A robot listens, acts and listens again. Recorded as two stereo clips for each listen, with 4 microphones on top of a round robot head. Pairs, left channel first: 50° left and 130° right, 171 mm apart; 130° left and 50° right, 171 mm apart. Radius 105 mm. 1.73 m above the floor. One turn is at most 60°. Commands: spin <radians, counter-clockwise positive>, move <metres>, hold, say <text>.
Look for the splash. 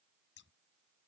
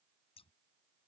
hold
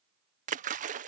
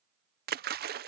spin -1.05
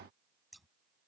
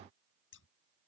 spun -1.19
spin -0.26
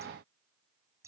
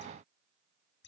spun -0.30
say I heard a splash from this way, but can't make it out now.